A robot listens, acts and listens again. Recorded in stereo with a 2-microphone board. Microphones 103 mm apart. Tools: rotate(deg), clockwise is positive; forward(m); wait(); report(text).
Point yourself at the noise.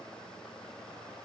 wait()
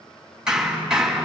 rotate(30)
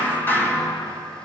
rotate(-20)
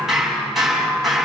report("Found it: hammering, straight ahead.")